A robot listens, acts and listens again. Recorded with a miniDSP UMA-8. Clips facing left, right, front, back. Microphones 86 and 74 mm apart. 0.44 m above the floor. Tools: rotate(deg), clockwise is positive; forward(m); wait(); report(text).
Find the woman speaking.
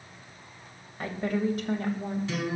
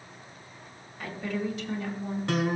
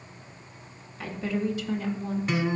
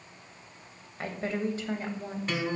rotate(-125)
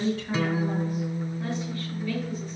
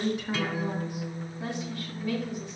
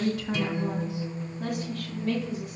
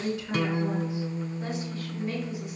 rotate(20)
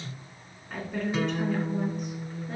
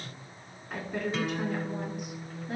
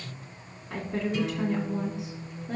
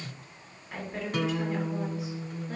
rotate(10)
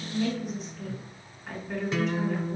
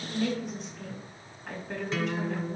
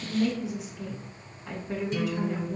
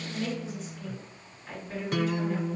report("Found it: a woman speaking, straight ahead, over 4 m away.")